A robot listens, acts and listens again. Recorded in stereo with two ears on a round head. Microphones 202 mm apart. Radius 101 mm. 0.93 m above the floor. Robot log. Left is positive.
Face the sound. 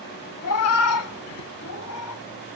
cmd yaw +90
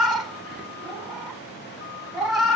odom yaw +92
end: Found it: a cat meowing, straight ahead.